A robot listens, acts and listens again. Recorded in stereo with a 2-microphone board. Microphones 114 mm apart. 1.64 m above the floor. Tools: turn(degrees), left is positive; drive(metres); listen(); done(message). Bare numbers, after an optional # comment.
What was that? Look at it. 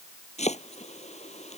turn(90)
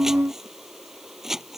done("Facing the chopping.")